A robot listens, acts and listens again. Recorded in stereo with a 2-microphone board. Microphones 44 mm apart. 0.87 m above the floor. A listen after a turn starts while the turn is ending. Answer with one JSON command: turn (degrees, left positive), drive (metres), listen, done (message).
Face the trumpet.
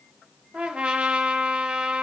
{"turn": -25}
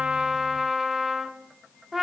{"done": "Found it: a trumpet, straight ahead, under 1 m away."}